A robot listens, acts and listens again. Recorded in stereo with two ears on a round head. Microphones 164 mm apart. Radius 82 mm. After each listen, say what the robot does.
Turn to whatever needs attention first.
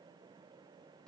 Keep listening.
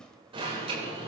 Turn 30° right.
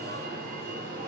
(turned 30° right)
Turn 120° right.
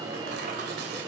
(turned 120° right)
Turn 25° right.
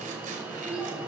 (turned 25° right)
Facing the alarm, over 4 m away.